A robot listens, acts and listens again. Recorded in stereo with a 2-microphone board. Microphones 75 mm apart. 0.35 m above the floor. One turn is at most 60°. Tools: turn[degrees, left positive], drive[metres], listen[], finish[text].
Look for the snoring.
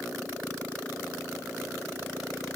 Action: listen[]
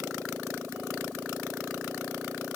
Action: listen[]
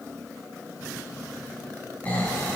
Thought: The snoring: about 25° left or 155° left.
Action: turn[25]
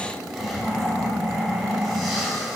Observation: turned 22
Action: finish[Found it: snoring, straight ahead, 2 to 4 m away.]